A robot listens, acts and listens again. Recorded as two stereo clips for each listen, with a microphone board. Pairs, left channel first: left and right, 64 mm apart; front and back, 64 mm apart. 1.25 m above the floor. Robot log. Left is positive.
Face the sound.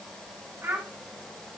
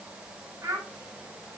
note: The child speaking: 140° right.
cmd yaw -140
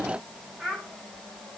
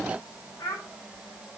end: Facing the child speaking, 2 to 4 m away.